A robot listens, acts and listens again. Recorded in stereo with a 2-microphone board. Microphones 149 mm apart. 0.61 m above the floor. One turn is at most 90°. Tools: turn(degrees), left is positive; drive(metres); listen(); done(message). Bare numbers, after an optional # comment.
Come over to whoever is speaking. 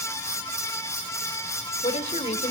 # The woman speaking: about 55° left or 125° left.
turn(55)
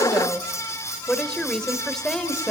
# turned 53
drive(1.0)
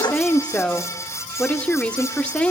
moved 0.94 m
# The woman speaking is now 10° left.
turn(10)
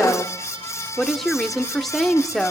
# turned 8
drive(1.0)
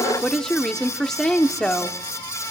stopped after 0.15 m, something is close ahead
done("I am next to the woman speaking.")